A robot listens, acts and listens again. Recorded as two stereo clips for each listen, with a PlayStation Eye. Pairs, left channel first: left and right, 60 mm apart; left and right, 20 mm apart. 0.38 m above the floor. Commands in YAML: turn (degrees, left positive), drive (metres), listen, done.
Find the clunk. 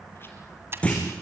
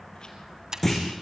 turn: 20
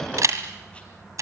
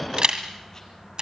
listen: true
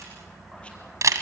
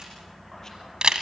done: "I heard a clunk, but can't make it out now. It was about straight ahead or 140° left."